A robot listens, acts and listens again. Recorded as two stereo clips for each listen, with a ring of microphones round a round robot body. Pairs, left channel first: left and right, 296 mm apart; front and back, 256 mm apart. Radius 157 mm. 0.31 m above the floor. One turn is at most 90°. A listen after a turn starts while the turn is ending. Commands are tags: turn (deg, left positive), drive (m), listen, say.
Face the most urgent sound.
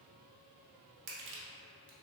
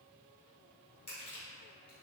<listen/>
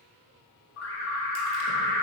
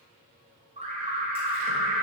<turn deg="90"/>
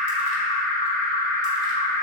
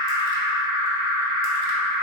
<turn deg="15"/>
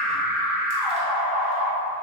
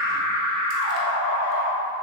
<say>Facing the alarm, 1 to 2 m away.</say>